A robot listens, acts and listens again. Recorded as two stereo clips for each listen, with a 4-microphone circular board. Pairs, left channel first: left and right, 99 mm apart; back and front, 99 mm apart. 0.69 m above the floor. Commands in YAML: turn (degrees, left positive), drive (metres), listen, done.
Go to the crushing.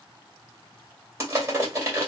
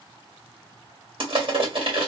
turn: -30
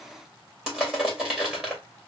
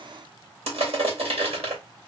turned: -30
drive: 1.0
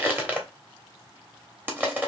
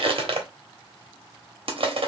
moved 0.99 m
turn: -20
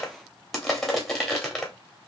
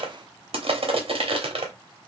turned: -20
drive: 1.0
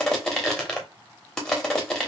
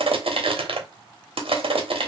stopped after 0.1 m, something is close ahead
done: "I am next to the crushing."